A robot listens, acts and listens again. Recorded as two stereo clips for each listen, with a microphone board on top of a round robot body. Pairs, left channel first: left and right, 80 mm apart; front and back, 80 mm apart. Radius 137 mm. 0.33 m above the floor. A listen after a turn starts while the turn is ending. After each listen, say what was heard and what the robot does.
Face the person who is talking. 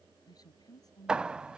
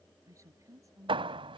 The woman speaking: 130° left. Turn 130° left.
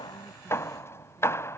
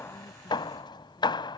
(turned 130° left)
Keep listening.
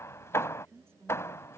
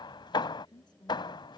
The woman speaking is now 30° right. Turn 30° right.
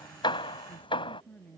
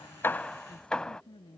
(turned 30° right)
The woman speaking is now 20° left. Turn 20° left.
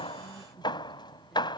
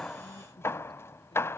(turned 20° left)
Keep listening.
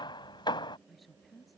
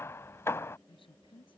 Facing the woman speaking.